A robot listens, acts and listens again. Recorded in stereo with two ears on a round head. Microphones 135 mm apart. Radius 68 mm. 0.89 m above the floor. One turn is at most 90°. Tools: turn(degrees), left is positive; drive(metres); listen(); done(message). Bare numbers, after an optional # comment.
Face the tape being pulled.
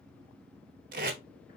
# The tape being pulled: about 55° right or 125° right.
turn(-55)
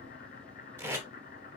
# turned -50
# So it is at 15° right.
turn(-15)
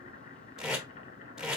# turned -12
done("Facing the tape being pulled.")